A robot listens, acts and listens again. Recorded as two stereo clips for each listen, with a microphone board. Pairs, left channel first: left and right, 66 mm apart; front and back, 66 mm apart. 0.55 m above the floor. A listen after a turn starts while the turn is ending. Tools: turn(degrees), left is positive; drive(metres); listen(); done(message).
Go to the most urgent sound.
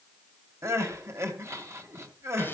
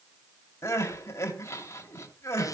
turn(degrees=-45)
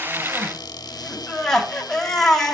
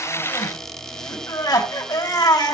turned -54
drive(metres=1.0)
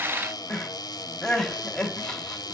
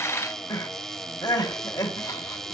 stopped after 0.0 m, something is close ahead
turn(degrees=10)
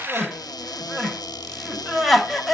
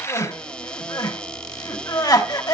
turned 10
done("Something is in my way. I am facing the crying but have not reached it.")